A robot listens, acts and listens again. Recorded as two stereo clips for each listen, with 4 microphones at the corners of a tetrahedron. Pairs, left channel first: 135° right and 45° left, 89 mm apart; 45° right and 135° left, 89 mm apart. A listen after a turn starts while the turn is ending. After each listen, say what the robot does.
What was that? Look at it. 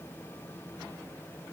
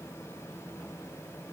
Keep listening.
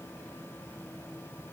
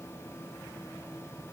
Keep listening.
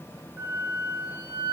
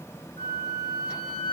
Turn 20° right.
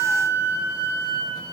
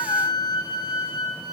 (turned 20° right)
Facing the flute, over 4 m away.